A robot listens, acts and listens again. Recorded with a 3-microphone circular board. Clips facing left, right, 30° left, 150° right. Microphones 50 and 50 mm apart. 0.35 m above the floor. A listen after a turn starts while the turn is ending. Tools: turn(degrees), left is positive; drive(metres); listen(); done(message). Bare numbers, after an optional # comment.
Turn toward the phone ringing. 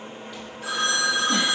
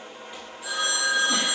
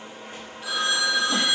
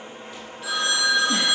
# The phone ringing: 120° left.
turn(120)
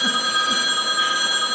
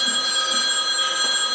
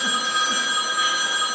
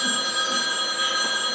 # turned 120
# The phone ringing is now 30° left.
turn(30)
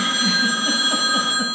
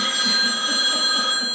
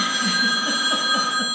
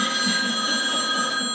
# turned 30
# The phone ringing is now 15° left.
turn(15)
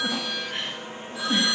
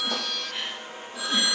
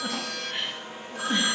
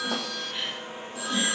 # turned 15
done("Facing the phone ringing.")